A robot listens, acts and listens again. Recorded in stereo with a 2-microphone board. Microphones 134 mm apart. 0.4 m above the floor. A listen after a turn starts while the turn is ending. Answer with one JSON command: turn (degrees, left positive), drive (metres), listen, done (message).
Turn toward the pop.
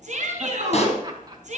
{"turn": 50}
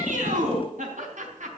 {"listen": true}
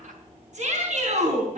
{"done": "I heard a pop, but can't make it out now. It was about straight ahead or 80° left."}